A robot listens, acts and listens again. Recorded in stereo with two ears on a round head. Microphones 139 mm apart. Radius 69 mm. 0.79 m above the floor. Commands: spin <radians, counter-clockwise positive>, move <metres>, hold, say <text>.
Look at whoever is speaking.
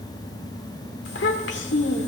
spin 1.57
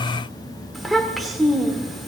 say Facing the child speaking, 1 to 2 m away.